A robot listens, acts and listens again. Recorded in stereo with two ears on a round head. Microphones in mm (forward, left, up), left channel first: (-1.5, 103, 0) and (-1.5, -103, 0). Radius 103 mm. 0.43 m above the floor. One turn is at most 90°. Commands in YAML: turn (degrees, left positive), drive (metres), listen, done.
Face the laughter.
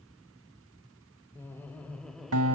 turn: 30
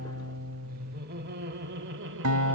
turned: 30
turn: -55
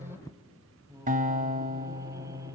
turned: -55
turn: -15
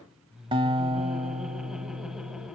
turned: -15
done: "Found it: laughter, straight ahead."